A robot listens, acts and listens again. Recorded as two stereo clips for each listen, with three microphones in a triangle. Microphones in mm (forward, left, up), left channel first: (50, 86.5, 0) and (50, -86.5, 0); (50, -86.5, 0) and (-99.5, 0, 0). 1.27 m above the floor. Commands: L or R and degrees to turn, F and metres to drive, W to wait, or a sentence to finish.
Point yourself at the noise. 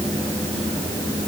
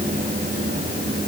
W
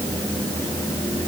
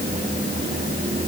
W
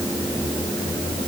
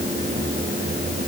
I can't make out anything.